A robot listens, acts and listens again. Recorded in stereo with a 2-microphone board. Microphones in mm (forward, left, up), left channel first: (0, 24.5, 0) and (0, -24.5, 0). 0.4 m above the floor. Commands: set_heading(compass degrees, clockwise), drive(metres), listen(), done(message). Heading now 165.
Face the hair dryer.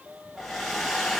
set_heading(135)
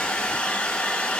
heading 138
set_heading(348)
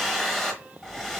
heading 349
done("Found it: a hair dryer, straight ahead, 1 to 2 m away.")